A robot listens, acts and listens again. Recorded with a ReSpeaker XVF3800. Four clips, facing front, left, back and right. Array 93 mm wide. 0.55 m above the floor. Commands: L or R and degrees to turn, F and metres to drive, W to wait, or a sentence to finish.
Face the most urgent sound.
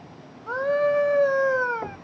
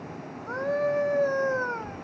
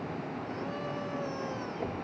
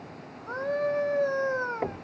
Found it: a scream, straight ahead.